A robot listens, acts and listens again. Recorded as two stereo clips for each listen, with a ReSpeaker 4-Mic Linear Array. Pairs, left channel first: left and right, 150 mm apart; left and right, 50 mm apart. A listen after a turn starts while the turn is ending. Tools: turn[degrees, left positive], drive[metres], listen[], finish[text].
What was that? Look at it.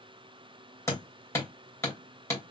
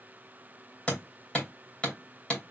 Thought: The hammering: about 20° left or 160° left.
Action: turn[20]
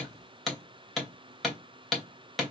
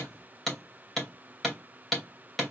Action: finish[Facing the hammering, 2 to 4 m away.]